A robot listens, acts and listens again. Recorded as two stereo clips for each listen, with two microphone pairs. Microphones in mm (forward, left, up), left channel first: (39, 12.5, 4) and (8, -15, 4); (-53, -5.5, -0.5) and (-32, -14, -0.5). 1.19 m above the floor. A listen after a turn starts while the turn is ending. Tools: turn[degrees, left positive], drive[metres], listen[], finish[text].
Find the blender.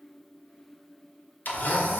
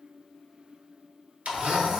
Action: finish[Found it: a blender, straight ahead, under 1 m away.]